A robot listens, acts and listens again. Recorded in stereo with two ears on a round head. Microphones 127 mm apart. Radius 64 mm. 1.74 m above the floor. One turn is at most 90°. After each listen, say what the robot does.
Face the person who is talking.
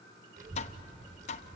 Turn 55° right.
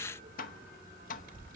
Turn 65° right.
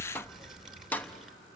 Facing the child speaking, 2 to 4 m away.